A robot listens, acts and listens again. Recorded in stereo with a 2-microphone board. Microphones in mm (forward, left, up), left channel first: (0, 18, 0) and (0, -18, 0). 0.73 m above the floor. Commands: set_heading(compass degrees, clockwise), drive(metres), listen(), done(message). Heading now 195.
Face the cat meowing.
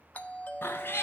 set_heading(105)
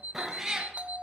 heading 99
set_heading(114)
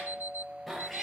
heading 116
done("Facing the cat meowing.")